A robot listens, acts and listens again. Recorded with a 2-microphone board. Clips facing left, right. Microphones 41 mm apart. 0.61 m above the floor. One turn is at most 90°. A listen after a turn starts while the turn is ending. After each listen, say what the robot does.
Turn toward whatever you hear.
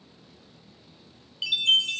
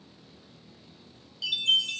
Turn 45° left.
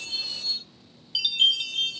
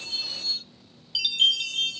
Facing the chime.